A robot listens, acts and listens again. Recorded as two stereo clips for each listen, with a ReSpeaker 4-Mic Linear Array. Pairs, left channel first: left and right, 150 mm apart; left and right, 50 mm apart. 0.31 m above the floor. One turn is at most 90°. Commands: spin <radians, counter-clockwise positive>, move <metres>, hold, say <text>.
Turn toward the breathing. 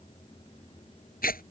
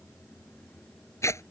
hold
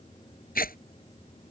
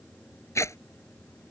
hold
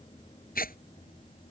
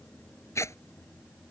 say I can't make out breathing to turn to.